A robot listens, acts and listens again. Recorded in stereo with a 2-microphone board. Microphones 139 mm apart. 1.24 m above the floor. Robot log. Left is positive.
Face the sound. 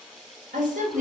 note: The woman speaking: about 60° right or 120° right.
cmd yaw -60
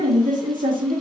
note: So it is at 75° right.
cmd yaw -75
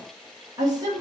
note: The woman speaking is now 30° right.
cmd yaw -30
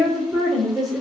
end: Found it: a woman speaking, straight ahead.